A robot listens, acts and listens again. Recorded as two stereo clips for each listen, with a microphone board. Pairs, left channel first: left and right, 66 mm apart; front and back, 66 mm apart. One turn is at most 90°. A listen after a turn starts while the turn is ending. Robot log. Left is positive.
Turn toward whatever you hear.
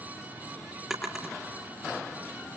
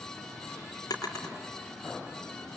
end: Facing the drawer, over 4 m away.